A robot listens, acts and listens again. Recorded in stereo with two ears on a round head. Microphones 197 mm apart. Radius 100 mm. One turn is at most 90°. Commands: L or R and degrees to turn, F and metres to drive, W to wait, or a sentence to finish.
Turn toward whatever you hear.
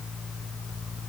W
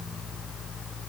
W
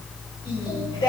L20
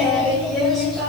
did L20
L30
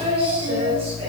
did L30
R30
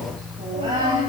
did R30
R25
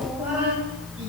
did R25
Facing the singing, over 4 m away.